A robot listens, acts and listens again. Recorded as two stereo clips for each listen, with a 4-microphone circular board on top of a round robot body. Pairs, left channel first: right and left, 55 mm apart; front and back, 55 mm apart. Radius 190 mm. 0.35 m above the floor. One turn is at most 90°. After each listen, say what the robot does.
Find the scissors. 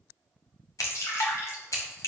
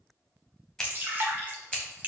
Turn 80° right.
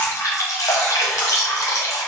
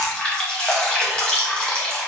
Keep listening.
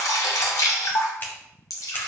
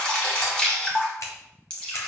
Turn 35° right.
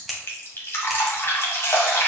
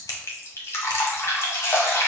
Found it: scissors, straight ahead, under 1 m away.